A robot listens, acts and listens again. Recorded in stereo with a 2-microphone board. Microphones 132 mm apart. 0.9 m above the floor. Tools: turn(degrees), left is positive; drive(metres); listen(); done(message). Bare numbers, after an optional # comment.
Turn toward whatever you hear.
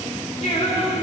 # The singing: about 55° left or 125° left.
turn(55)
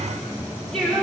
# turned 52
done("Found it: singing, straight ahead.")